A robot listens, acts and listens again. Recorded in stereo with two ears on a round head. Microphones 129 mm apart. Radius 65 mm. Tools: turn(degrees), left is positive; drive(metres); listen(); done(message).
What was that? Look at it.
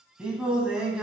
turn(degrees=-30)
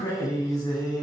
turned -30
turn(degrees=30)
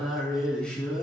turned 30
done("Facing the singing.")